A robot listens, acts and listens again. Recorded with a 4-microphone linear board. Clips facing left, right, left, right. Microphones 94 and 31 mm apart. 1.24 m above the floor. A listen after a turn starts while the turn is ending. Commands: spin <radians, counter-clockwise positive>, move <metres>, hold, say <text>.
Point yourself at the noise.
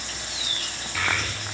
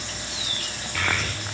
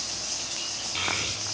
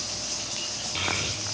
spin 0.52
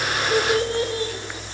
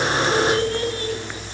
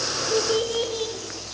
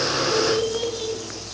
spin 2.88
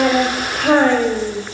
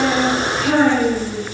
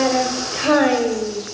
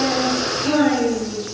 spin 1.13
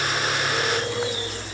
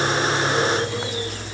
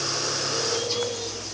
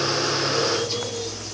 say Found it: a child speaking, straight ahead, 2 to 4 m away.